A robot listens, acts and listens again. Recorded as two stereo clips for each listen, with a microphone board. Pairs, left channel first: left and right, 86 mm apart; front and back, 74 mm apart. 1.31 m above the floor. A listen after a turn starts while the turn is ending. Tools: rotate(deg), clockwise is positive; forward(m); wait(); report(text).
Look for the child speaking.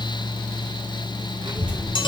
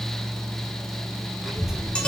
rotate(95)
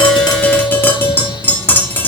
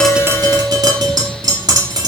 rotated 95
wait()
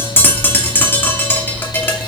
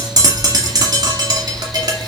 rotate(35)
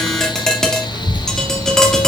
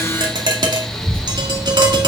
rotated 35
rotate(20)
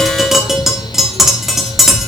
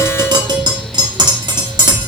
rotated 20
rotate(10)
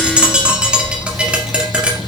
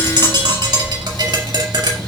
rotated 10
report("Found it: a child speaking, straight ahead, over 4 m away.")